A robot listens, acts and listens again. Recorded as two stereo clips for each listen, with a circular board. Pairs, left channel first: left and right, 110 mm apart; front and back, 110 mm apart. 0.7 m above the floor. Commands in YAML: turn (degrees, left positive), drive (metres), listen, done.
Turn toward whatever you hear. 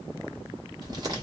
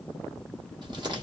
turn: -140
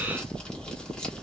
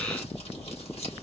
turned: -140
turn: 10
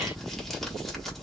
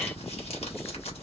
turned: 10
done: "Facing the crumpling, 1 to 2 m away."